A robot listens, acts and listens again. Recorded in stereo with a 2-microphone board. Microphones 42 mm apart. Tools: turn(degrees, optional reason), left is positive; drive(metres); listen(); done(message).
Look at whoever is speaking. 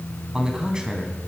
turn(degrees=-20, reason="The man speaking: about 20° right or 160° right.")
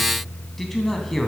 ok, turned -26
done("Facing the man speaking.")